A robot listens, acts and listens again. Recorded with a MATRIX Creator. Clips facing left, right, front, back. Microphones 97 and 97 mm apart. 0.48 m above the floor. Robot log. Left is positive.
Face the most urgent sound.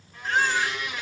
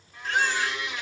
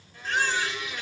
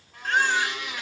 note: The baby crying: 145° left.
cmd yaw +145
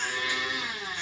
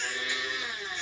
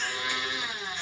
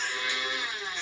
cmd idle
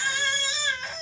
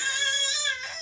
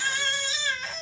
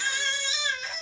note: The baby crying is now 50° left.
cmd yaw +50
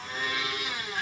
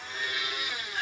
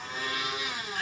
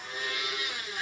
cmd idle
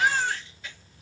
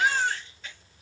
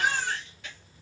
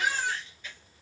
end: Found it: a baby crying, straight ahead, 2 to 4 m away.